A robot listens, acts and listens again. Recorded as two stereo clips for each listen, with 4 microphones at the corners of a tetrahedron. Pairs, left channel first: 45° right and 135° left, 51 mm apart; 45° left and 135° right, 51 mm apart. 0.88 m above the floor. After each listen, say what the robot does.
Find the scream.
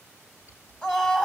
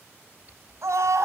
Turn 110° right.
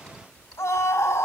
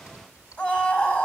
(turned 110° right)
Turn 10° right.
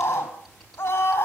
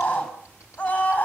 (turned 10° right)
Facing the scream, over 4 m away.